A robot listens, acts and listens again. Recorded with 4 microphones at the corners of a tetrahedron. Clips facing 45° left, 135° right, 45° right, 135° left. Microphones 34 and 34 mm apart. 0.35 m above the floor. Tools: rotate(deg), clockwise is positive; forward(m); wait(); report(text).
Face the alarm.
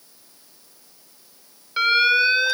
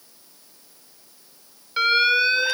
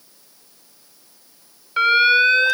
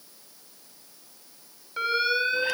rotate(35)
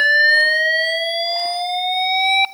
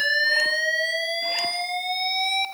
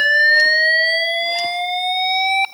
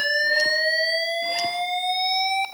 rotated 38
report("Facing the alarm, 1 to 2 m away.")